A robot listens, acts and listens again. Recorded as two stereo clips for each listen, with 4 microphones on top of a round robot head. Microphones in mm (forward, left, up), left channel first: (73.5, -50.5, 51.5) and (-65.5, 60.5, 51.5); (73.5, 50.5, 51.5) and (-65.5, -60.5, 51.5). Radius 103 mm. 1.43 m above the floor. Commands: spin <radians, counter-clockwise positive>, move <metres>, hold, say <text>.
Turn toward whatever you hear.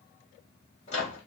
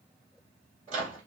spin -1.57
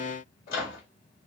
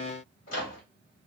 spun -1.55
say Found it: a microwave, straight ahead, 2 to 4 m away.